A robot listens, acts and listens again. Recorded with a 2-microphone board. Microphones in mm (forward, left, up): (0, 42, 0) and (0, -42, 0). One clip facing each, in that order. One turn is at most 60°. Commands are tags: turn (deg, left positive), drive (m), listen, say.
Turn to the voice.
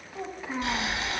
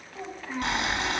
<turn deg="30"/>
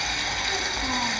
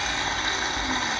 <listen/>
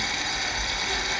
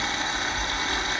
<listen/>
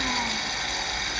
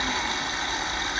<say>I heard a child speaking, but can't make it out now. It was about 20° right or 140° left.</say>